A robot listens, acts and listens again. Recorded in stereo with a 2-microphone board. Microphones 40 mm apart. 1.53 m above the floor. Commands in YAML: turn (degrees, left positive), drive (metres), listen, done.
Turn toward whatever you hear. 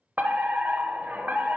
turn: -45
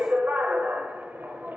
turn: -80
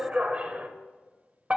turn: -45
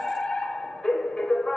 turn: 15
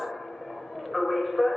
done: "Facing the fire alarm, under 1 m away."